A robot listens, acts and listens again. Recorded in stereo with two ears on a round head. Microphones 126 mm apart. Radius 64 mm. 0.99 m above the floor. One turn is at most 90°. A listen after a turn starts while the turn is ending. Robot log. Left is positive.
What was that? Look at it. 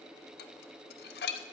cmd yaw +90
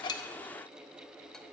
cmd idle
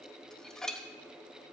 end: Found it: dishes clattering, straight ahead.